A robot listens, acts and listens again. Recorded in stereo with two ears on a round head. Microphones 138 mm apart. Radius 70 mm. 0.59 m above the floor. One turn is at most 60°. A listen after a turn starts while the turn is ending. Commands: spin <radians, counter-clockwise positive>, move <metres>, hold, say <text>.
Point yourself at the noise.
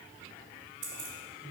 spin -0.79
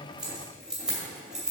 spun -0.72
say Facing the keys jangling, 2 to 4 m away.